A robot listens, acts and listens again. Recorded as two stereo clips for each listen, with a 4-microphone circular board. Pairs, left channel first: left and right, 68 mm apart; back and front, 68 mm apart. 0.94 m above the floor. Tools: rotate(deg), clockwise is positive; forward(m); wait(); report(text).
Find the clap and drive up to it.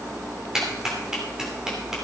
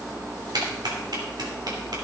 rotate(10)
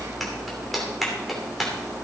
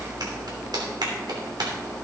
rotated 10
forward(1.0)
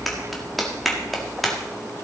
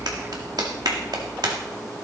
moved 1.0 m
forward(1.0)
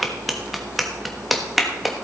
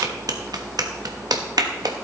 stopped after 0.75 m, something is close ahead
report("I am next to the clap.")